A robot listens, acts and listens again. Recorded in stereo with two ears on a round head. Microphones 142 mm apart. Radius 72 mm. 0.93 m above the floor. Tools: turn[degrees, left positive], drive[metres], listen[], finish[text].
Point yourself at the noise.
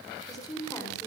Thought: The woman speaking: about 20° left or 160° left.
Action: turn[20]
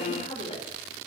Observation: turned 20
Thought: The woman speaking: about 35° left or 145° left.
Action: turn[35]
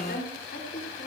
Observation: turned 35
Thought: So it is at 120° left.
Action: turn[120]
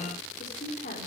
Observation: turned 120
Thought: The woman speaking is now 50° left.
Action: turn[50]
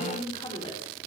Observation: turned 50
Thought: The woman speaking is now 30° left.
Action: turn[30]
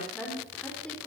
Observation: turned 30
Thought: The woman speaking is now 10° left.
Action: turn[10]
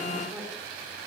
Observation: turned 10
Action: finish[Found it: a woman speaking, straight ahead, 2 to 4 m away.]